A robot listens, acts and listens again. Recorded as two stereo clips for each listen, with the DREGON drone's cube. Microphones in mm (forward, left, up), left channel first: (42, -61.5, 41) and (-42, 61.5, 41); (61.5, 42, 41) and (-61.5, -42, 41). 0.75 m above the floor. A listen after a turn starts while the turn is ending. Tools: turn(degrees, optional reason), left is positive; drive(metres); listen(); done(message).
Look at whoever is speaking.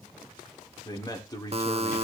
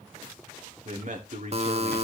turn(degrees=-120, reason="The man speaking: 120° right.")
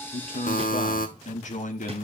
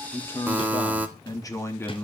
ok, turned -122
turn(degrees=-45, reason="The man speaking is now 45° right.")
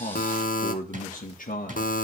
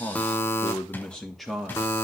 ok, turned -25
turn(degrees=-60, reason="The man speaking is now 60° right.")
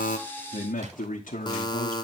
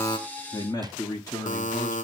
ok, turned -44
turn(degrees=-35, reason="The man speaking is now 35° right.")
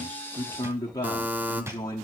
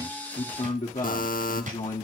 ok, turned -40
done("Facing the man speaking, 1 to 2 m away.")